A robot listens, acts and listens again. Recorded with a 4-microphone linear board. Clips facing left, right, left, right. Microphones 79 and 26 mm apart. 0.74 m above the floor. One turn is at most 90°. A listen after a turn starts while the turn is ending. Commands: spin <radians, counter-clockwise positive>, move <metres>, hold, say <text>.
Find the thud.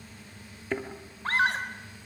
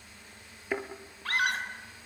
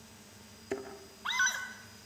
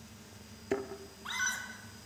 spin -0.52
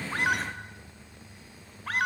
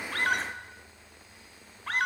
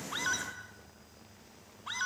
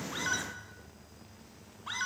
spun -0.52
hold
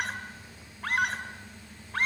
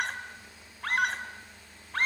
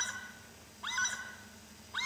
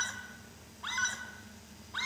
say I heard a thud, but can't make it out now. It was about 20° left or 140° right.